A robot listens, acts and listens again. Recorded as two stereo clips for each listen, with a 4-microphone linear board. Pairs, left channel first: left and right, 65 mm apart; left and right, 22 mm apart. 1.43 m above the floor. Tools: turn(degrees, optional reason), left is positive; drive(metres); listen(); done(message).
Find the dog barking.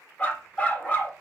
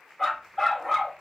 turn(degrees=25, reason="The dog barking: about 25° left or 155° left.")
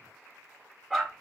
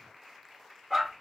done("Found it: a dog barking, straight ahead, 1 to 2 m away.")